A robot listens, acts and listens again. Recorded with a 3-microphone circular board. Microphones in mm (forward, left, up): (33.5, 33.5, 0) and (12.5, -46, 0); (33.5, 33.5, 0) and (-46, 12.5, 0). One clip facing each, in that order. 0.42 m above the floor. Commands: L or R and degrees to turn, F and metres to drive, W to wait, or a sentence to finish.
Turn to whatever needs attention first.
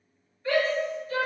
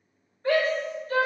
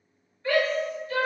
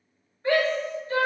R110
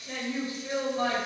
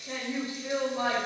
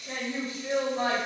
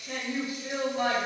R45
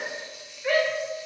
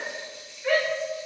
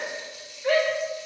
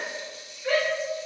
R15
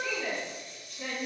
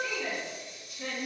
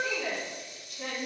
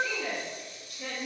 Found it: a shout, straight ahead, 1 to 2 m away.